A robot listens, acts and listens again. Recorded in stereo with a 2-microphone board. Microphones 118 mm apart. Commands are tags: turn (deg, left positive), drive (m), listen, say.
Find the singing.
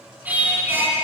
<turn deg="-20"/>
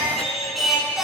<turn deg="-30"/>
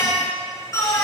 <turn deg="25"/>
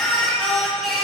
<say>Found it: singing, straight ahead, over 4 m away.</say>